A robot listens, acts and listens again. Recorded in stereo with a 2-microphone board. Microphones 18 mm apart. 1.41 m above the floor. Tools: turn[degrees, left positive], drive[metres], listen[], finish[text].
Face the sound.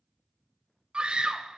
Thought: The scream: about 55° right or 125° right.
Action: turn[-55]
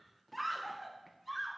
Action: finish[Found it: a scream, straight ahead.]